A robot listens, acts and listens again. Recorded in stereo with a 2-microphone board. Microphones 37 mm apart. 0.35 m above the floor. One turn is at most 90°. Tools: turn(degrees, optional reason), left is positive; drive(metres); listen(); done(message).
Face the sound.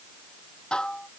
turn(degrees=20, reason="The dishes clattering: about 20° left or 160° left.")
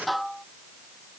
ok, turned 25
done("Facing the dishes clattering.")